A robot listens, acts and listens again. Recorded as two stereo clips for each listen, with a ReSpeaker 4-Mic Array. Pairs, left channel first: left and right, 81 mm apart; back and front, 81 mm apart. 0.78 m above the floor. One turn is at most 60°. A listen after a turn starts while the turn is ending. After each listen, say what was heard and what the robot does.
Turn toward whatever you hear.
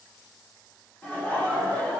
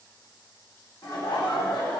The laughter: 150° left. Turn 60° left.
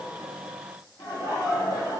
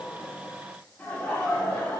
The laughter is now 105° left. Turn 60° left.
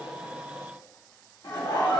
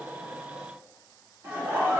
The laughter is now 60° left. Turn 60° left.
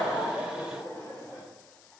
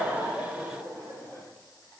The laughter is now 25° left. Turn 25° left.
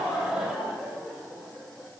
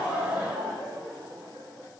The laughter is now 10° right. Turn 10° right.
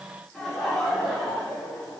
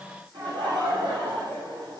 Facing the laughter.